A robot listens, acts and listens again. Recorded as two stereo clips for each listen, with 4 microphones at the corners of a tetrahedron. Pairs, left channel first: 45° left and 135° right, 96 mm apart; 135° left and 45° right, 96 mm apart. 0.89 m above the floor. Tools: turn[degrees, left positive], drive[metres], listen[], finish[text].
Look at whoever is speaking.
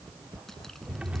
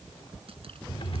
Action: listen[]
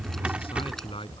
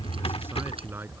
Thought: The man speaking: 20° left.
Action: turn[20]
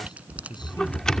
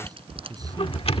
Action: finish[Facing the man speaking.]